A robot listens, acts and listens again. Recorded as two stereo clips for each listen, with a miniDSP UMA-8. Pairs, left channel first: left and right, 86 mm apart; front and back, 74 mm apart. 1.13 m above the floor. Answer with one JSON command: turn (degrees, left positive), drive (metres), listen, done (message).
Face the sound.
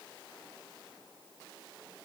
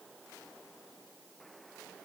{"listen": true}
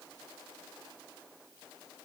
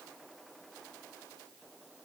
{"listen": true}
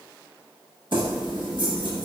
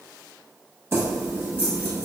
{"turn": -120}
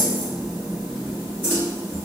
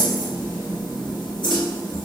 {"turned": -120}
{"turn": -20}
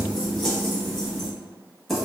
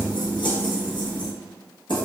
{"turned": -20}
{"done": "Found it: keys jangling, straight ahead, under 1 m away."}